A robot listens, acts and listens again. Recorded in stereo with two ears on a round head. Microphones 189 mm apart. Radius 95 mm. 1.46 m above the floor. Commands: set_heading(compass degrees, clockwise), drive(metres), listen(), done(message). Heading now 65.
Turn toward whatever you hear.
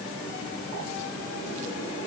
listen()
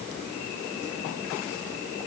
listen()
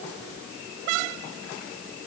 done("I can't make out anything.")